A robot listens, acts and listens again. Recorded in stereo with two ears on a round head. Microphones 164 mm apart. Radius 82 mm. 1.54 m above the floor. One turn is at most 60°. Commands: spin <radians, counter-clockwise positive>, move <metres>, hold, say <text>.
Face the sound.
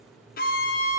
spin 0.87
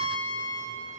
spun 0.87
spin 1.05
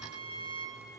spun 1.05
spin 0.52
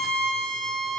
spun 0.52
say Found it: a violin, straight ahead.